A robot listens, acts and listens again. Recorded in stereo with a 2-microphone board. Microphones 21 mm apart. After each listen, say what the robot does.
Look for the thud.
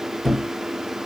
Turn 30° left.
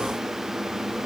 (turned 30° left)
Keep listening.
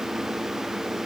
I heard a thud, but can't make it out now. It was about 25° right or 145° left.